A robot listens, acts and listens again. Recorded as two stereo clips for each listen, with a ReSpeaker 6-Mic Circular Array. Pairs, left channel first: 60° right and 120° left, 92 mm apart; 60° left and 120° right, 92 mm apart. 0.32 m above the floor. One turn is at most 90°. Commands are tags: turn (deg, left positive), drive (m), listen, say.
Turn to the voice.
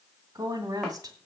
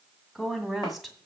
<turn deg="90"/>
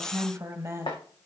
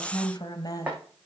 <turn deg="75"/>
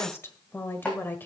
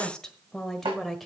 <turn deg="-25"/>
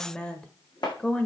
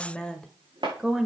<turn deg="-65"/>
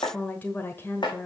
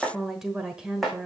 <turn deg="-50"/>
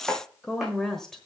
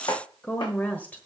<turn deg="15"/>
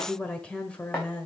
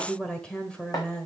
<say>Found it: a woman speaking, straight ahead, 1 to 2 m away.</say>